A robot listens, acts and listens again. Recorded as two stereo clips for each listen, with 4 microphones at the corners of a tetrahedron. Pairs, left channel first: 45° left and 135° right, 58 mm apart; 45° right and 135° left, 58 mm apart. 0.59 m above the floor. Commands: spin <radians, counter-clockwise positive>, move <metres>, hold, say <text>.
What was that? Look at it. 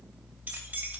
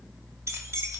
spin 2.79
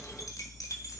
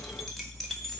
spin 0.70
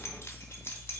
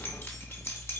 say Facing the keys jangling, 2 to 4 m away.